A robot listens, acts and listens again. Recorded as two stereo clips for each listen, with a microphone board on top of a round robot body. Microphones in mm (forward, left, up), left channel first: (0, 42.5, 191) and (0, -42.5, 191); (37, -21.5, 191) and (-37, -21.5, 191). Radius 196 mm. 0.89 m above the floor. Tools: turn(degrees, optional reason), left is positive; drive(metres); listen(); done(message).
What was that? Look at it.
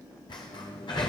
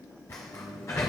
turn(degrees=55, reason="The sliding door: 55° left.")
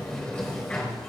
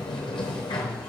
turn(degrees=15, reason="The sliding door is now 15° left.")
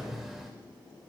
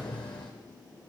done("Facing the sliding door, 1 to 2 m away.")